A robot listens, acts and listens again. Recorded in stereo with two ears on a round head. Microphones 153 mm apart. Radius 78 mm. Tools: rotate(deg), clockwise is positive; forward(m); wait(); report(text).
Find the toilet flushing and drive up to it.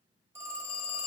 wait()
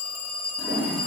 rotate(90)
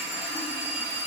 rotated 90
rotate(10)
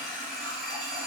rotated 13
forward(1.0)
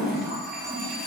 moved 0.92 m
forward(1.0)
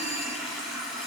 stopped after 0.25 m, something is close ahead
report("Arrived at the toilet flushing, straight ahead.")